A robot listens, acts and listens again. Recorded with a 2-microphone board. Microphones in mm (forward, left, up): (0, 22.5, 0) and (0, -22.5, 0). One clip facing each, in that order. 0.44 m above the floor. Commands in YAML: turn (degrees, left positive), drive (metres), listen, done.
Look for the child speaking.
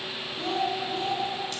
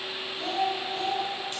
turn: 30
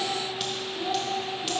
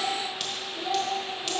turn: 30
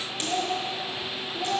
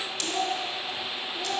turn: 20
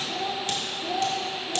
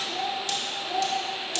turn: 145
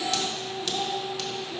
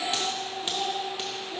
done: "Found it: a child speaking, straight ahead, 2 to 4 m away."